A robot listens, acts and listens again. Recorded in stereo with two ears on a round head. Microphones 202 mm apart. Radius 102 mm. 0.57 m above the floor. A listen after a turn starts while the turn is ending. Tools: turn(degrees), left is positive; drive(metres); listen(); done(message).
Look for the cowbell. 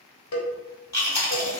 turn(degrees=90)
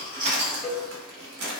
done("Facing the cowbell.")